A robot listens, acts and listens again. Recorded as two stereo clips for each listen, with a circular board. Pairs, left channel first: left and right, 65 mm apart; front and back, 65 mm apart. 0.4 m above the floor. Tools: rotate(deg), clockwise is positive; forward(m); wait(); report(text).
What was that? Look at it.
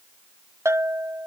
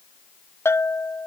rotate(45)
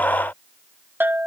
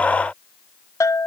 rotate(30)
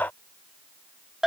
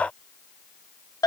report("Facing the bell.")